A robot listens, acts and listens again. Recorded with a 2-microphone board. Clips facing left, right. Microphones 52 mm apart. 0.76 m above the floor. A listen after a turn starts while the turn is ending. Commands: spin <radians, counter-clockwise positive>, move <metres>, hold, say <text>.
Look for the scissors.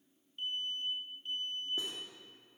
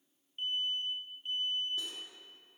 hold
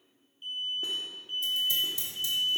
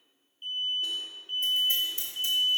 spin -0.70
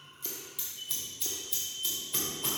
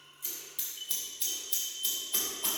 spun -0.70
say Found it: scissors, straight ahead, 2 to 4 m away.